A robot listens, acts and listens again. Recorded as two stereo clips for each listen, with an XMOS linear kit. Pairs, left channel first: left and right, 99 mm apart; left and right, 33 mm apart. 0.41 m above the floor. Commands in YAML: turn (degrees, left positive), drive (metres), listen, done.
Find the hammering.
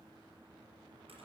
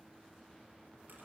listen: true
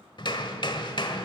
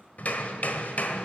turn: 55
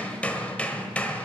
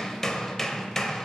turn: 15
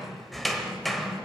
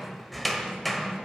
done: "Facing the hammering, 1 to 2 m away."